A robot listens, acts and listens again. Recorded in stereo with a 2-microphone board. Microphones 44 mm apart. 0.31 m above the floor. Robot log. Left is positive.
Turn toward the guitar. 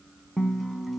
cmd yaw -30
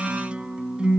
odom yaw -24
note: So it is at 155° right.
cmd yaw -155
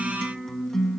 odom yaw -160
note: The guitar is now 10° left.
cmd yaw +10
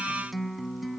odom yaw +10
end: Found it: a guitar, straight ahead.